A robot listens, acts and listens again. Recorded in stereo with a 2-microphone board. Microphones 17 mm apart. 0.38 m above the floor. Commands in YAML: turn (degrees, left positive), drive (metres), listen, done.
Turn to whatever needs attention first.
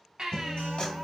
turn: -60
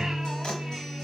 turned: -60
listen: true
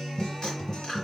listen: true
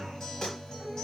done: "I heard a baby crying, but can't make it out now. It was about straight ahead or 60° right."